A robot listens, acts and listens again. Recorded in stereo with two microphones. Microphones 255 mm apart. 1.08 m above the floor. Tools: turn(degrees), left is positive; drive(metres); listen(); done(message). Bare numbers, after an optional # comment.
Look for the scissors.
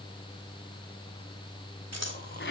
turn(-90)
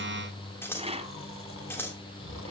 # So it is at 10° left.
turn(10)
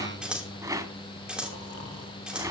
done("Found it: scissors, straight ahead.")